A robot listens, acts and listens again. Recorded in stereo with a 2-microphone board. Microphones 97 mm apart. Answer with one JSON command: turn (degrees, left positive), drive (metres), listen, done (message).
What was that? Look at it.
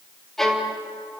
{"turn": 30}
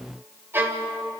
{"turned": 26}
{"turn": -20}
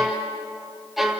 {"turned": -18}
{"done": "Found it: a violin, straight ahead."}